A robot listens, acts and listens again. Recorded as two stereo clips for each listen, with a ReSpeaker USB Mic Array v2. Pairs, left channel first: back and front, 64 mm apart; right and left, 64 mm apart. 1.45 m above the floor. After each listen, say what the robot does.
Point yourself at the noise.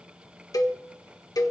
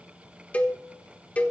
Turn 155° right.
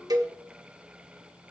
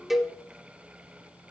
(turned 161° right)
Found it: a cowbell, straight ahead, 1 to 2 m away.